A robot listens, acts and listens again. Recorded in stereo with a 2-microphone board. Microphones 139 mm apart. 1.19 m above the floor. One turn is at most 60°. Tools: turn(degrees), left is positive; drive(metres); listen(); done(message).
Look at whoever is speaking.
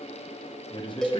turn(degrees=35)
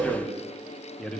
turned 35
done("Found it: a man speaking, straight ahead, under 1 m away.")